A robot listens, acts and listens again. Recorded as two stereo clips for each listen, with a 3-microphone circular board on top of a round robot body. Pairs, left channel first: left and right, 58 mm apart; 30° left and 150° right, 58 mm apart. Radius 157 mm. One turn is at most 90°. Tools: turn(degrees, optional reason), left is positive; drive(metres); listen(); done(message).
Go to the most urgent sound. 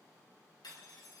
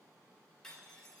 listen()
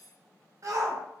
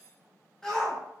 turn(degrees=-50, reason="The shout: 50° right.")
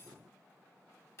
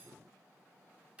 listen()
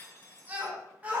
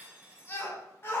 turn(degrees=-20, reason="The shout is now 20° right.")
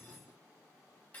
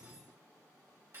listen()
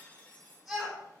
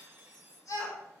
drive(metres=1.0)
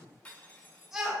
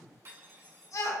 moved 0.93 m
drive(metres=1.0)
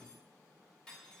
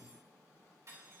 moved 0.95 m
listen()
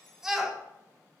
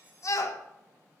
drive(metres=1.0)
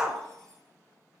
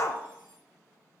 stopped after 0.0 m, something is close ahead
done("Arrived at the shout, straight ahead.")